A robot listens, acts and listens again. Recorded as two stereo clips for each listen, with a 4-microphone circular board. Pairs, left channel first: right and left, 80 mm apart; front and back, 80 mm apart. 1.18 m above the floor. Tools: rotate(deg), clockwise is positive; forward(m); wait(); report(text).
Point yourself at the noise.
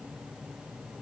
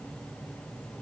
wait()
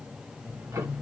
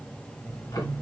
rotate(-40)
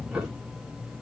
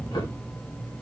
rotate(-15)
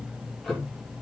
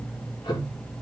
report("Found it: ticking, straight ahead, 2 to 4 m away.")